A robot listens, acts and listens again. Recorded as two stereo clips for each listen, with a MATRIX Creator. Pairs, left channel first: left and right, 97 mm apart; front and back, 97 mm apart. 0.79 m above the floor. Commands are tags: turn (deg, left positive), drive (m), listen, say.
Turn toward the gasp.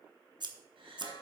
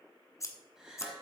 <turn deg="-95"/>
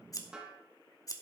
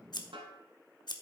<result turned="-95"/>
<say>Facing where the gasp came from. I can't hear it now.</say>